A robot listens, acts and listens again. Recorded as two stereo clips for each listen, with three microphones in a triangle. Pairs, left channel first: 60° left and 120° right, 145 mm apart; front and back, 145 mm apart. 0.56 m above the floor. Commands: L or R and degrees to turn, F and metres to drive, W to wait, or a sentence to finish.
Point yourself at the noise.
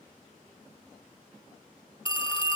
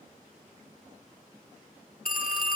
Facing the phone ringing.